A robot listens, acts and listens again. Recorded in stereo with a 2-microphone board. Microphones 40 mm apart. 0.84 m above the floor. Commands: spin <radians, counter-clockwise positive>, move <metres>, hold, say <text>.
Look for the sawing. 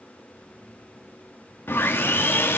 spin 1.13
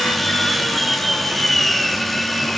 say Found it: sawing, straight ahead.